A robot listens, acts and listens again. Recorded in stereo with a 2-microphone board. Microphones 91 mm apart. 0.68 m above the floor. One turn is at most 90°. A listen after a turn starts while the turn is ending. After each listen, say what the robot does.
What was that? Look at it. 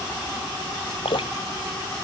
Turn 90° left.
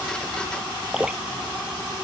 Turn 10° right.
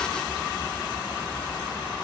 Keep listening.
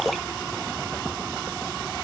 Facing the dripping.